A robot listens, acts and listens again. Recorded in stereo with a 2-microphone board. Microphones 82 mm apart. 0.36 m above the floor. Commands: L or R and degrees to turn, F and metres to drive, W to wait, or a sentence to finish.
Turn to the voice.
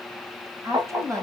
R45
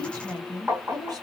R80
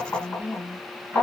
R30
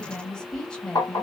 L10
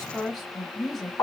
Found it: a woman speaking, straight ahead.